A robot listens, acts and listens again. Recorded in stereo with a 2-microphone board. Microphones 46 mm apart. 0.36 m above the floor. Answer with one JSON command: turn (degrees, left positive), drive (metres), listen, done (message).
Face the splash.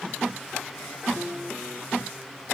{"listen": true}
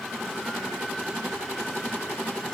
{"listen": true}
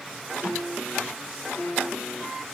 {"done": "I can't make out a splash."}